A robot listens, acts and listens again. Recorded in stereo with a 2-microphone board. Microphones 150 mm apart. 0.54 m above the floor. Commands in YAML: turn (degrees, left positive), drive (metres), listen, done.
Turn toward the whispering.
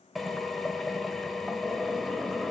listen: true
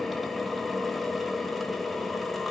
listen: true
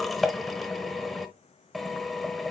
done: "I can't make out whispering to turn to."